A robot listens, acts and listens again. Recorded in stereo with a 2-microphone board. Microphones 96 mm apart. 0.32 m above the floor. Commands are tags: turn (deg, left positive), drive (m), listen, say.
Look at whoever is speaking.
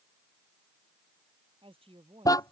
<turn deg="-75"/>
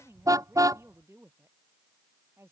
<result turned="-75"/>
<turn deg="-30"/>
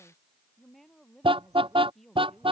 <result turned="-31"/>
<say>Found it: a woman speaking, straight ahead.</say>